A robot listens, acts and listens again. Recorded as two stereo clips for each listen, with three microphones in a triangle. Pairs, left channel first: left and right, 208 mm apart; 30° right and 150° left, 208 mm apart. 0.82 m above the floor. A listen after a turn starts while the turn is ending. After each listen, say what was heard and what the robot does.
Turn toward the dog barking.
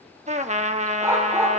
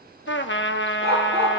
The dog barking: 165° right. Turn 165° right.
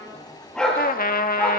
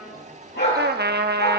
Found it: a dog barking, straight ahead, over 4 m away.